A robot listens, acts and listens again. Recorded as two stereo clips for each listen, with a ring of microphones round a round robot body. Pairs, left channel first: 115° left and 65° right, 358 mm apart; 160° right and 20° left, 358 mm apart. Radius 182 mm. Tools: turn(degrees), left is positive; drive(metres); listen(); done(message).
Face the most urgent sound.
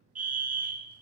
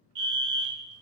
done("Found it: a fire alarm, straight ahead, 2 to 4 m away.")